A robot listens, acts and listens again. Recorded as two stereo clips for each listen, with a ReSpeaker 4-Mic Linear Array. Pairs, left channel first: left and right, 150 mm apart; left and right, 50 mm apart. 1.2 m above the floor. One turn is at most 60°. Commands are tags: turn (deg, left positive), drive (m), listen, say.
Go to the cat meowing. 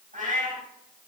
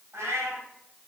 <turn deg="-60"/>
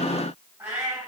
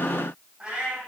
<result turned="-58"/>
<turn deg="-15"/>
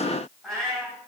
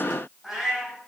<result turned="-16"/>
<drive m="1.0"/>
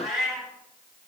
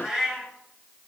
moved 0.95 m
<drive m="1.0"/>
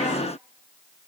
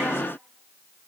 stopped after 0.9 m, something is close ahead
<listen/>
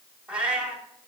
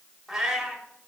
<turn deg="-10"/>
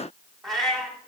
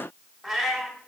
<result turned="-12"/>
<say>Arrived at the cat meowing, straight ahead.</say>